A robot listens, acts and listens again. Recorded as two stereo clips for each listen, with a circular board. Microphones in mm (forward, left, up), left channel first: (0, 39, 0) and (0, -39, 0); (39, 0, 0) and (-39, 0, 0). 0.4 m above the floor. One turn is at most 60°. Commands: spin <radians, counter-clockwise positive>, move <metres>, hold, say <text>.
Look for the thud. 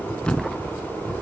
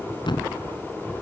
spin 0.17
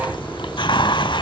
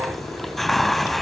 say Facing where the thud came from. I can't hear it now.